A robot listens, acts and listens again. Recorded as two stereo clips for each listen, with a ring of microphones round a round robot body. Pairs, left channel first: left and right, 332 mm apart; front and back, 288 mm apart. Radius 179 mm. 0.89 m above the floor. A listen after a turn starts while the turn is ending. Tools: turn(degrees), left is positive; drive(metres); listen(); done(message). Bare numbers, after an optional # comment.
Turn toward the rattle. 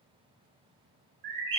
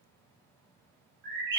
listen()
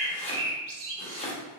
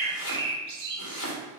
listen()
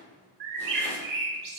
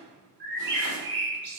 done("I can't make out a rattle, only chopping and a bird.")